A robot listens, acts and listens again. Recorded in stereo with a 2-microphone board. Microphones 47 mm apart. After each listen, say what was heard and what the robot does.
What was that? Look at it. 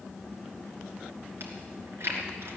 The chewing: about 60° right or 120° right. Turn 60° right.
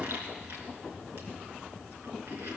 Keep listening.
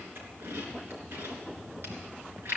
So it is at 60° right. Turn 60° right.
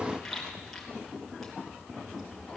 Facing the chewing.